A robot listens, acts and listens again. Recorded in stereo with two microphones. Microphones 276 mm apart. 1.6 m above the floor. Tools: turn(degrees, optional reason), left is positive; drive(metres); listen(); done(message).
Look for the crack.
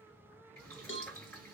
listen()
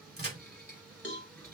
turn(degrees=-35, reason="The crack: about 35° right or 145° right.")
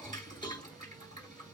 listen()
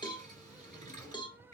done("I heard a crack, but can't make it out now. It was about straight ahead or 110° right.")